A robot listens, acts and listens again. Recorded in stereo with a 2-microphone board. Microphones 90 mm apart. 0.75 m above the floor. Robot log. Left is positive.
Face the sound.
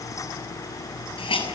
cmd yaw +90
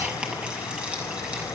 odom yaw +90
note: So it is at 15° right.
cmd yaw -15
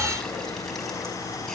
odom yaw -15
cmd idle
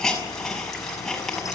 end: Found it: a hiss, straight ahead, over 4 m away.